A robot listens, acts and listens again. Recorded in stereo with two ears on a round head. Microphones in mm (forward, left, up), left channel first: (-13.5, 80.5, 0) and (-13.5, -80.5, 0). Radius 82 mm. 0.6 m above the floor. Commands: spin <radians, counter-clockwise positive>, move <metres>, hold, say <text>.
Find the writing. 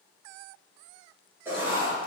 spin -0.52
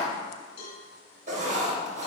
spin -2.36
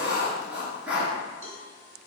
say Facing the writing, 2 to 4 m away.